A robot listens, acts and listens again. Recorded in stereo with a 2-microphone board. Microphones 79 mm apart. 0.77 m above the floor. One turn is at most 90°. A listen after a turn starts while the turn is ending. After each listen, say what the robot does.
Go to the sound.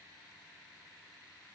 Keep listening.
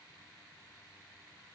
Keep listening.
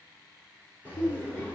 Turn 20° left.
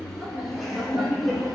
Drive 1.0 m forward.
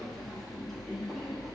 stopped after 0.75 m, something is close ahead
I am next to the laughter.